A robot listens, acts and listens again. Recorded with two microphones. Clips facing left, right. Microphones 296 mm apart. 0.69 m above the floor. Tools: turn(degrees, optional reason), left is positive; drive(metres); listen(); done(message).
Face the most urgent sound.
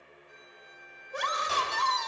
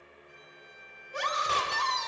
turn(degrees=60, reason="The scream: about 60° left or 120° left.")
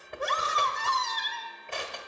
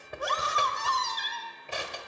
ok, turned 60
turn(degrees=35, reason="So it is at 35° left.")
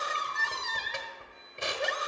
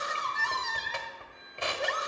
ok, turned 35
done("Found it: a scream, straight ahead.")